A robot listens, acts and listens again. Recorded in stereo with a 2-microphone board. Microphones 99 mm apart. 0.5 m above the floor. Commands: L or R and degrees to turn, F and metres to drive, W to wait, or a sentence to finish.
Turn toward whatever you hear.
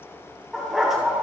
R30
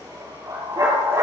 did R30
R135
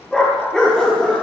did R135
L10
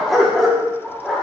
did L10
Found it: a dog barking, straight ahead.